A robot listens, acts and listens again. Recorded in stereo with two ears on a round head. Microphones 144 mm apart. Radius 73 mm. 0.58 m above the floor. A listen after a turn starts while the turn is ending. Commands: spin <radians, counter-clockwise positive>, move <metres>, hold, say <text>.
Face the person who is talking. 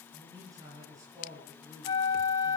spin -0.44
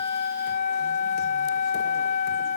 hold
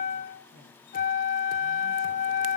spin -2.18
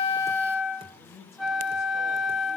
spin 0.17
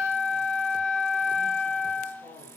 say Facing the man speaking.